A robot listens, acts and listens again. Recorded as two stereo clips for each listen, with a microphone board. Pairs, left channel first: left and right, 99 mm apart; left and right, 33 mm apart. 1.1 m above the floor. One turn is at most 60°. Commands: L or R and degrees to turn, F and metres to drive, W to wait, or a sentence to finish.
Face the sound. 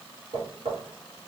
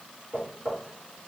R60
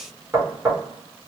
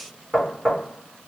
R25
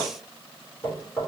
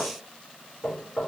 Facing the knocking.